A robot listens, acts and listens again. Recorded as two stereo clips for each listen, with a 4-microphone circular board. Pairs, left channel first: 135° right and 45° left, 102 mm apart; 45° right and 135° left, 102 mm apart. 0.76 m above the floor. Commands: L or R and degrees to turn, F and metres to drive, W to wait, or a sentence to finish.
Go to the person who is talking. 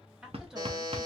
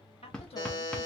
R40
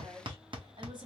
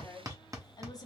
F1.0
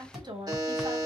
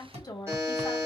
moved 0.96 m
F1.0
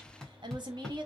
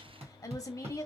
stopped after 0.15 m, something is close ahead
L10
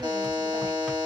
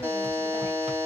W
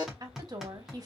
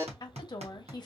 I am next to the woman speaking.